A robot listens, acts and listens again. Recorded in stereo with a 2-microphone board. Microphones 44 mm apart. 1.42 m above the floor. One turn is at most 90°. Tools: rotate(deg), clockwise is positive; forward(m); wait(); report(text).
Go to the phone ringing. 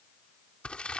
wait()
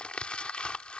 wait()
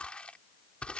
report("I can't make out a phone ringing to turn to.")